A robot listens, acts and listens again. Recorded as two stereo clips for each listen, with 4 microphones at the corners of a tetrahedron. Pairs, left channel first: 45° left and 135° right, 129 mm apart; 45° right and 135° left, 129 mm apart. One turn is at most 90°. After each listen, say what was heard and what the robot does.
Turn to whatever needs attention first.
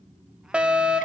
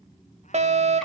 The fire alarm: 145° left. Turn 90° left.
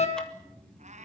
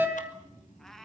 The fire alarm is now 65° left. Turn 65° left.
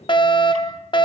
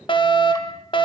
Facing the fire alarm.